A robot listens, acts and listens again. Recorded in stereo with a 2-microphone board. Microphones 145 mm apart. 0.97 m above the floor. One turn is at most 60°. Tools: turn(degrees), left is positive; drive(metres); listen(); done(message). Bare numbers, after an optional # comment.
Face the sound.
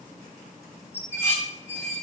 # The dishes clattering: about 20° left or 160° left.
turn(20)
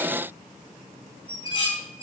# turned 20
# So it is at 140° left.
turn(60)
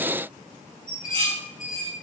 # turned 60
# The dishes clattering is now 100° left.
turn(60)
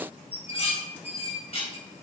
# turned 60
# The dishes clattering is now 45° left.
turn(45)
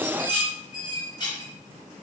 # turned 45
# The dishes clattering is now 30° left.
turn(30)
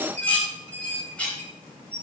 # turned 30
# The dishes clattering is now 10° left.
turn(10)
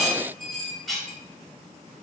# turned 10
done("Facing the dishes clattering.")